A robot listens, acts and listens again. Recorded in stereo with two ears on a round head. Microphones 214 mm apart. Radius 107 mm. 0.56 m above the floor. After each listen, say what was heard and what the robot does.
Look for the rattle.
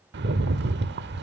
The rattle: about 45° right or 135° right. Turn 45° right.
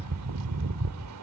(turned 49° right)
So it is at 80° right. Turn 80° right.
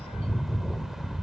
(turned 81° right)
Found it: a rattle, straight ahead, 1 to 2 m away.